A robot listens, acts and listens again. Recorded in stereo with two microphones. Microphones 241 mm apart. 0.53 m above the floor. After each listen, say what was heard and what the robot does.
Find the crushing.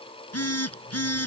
Keep listening.
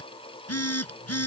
Keep listening.
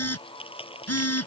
The crushing: about 20° left or 160° left. Turn 20° left.
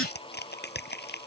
So it is at 135° left. Turn 135° left.
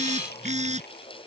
Keep listening.
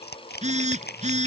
The crushing is now 40° left. Turn 40° left.
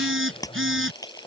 The crushing is now 15° left. Turn 15° left.
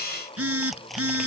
Keep listening.
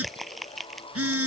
Found it: crushing, straight ahead.